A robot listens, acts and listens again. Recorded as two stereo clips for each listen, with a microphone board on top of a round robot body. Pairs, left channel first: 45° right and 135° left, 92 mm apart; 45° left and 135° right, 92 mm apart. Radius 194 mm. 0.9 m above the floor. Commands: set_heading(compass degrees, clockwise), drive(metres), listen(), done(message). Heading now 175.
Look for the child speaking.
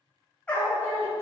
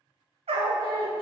set_heading(105)
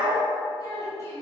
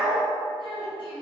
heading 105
set_heading(85)
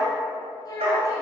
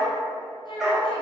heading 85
set_heading(75)
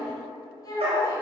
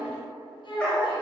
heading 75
set_heading(65)
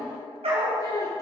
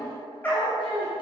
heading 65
set_heading(50)
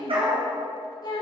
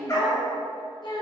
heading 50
done("Facing the child speaking.")